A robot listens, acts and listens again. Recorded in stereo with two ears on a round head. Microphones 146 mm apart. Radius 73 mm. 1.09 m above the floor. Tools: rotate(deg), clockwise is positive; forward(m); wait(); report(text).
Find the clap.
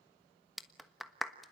rotate(-30)
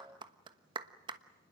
rotate(30)
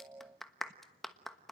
report("Found it: a clap, straight ahead, 1 to 2 m away.")